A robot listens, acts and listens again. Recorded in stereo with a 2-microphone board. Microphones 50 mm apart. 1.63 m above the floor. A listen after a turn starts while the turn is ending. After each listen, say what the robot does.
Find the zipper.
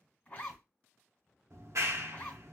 Turn 30° left.
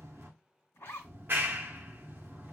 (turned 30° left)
Turn 120° left.
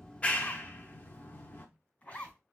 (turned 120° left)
Turn 30° left.
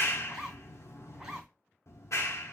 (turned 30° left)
Turn 15° right.
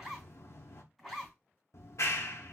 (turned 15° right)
Facing the zipper, 2 to 4 m away.